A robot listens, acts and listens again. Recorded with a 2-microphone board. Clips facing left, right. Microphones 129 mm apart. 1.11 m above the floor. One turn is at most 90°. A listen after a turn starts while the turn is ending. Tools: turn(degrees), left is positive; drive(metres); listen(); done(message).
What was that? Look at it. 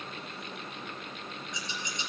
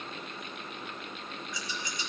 turn(degrees=20)
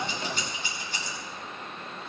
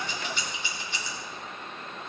turn(degrees=90)
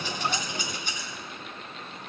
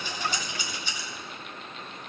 turn(degrees=50)
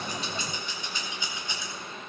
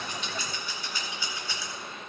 turn(degrees=20)
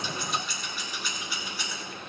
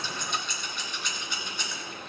done("Facing the scissors, 2 to 4 m away.")